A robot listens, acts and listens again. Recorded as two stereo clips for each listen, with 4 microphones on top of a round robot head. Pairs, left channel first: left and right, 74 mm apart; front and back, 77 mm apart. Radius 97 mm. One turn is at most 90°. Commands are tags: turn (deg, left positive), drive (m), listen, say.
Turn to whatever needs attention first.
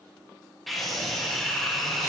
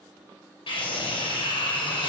<say>Found it: a scream, straight ahead.</say>